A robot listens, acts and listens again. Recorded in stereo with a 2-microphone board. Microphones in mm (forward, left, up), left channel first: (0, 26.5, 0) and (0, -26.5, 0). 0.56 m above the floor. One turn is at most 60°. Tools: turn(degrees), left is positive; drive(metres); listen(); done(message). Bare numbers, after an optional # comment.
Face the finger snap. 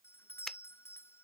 turn(30)
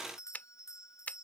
# So it is at 140° left.
turn(60)
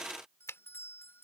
# The finger snap is now 90° left.
turn(60)
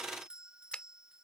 # The finger snap is now 25° left.
turn(25)
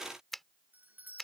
done("Found it: a finger snap, straight ahead.")